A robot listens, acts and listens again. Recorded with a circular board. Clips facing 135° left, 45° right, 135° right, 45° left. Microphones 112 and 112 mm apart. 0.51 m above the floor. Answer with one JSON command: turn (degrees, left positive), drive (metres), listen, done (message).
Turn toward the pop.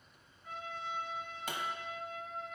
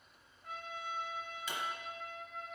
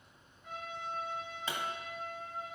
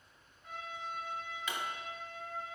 {"turn": 170}
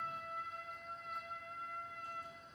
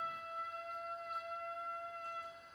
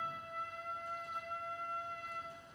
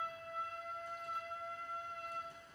{"done": "I heard a pop from this way, but can't make it out now."}